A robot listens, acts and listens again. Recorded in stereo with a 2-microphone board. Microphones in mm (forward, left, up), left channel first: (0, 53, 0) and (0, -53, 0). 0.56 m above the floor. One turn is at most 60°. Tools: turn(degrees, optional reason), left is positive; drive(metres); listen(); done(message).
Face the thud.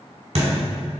turn(degrees=-60, reason="The thud: about 75° right or 105° right.")
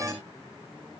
listen()
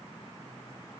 done("I heard a thud, but can't make it out now. It was about 15° right or 45° right.")